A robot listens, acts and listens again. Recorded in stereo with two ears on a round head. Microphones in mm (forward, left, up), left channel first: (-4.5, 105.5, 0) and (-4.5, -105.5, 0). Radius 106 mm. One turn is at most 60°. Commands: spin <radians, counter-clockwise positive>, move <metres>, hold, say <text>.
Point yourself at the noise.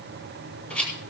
spin 0.52
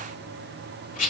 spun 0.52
spin 1.05
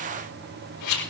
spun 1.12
spin 1.05
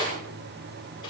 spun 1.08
spin 0.35
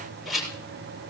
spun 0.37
say Found it: a rattle, straight ahead.